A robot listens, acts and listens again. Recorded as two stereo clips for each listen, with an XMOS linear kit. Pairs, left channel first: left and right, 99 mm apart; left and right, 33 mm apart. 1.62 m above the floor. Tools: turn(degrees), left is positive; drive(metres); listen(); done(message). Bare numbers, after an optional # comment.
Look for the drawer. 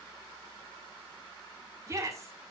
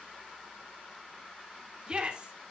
listen()
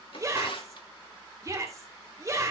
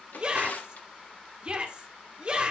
# The drawer: about 60° left or 120° left.
turn(60)
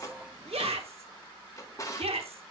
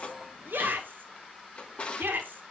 # So it is at 40° left.
turn(40)
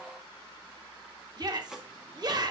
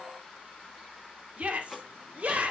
done("Facing the drawer, 1 to 2 m away.")